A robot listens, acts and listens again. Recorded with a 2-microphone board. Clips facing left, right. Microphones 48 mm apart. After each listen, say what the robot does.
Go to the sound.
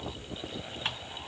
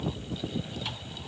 Keep listening.
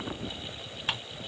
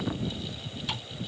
Turn 50° left.
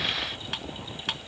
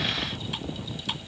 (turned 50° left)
Turn 75° left.
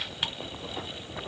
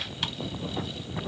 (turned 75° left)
Keep listening.
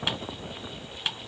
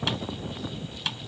Turn 20° left.
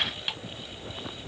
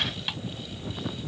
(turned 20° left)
Drive 1.0 m forward.
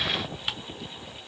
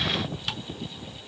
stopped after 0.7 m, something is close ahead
Turn 15° left.
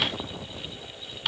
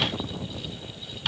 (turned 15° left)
I am next to the ticking.